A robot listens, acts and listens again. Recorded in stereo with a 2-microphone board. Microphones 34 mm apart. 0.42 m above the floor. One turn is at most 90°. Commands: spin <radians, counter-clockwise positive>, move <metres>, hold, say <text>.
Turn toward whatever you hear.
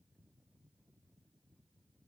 hold
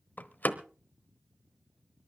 spin 1.05
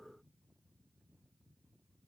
hold
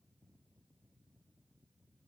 say I heard a door slam, but can't make it out now. It was about straight ahead or 60° left.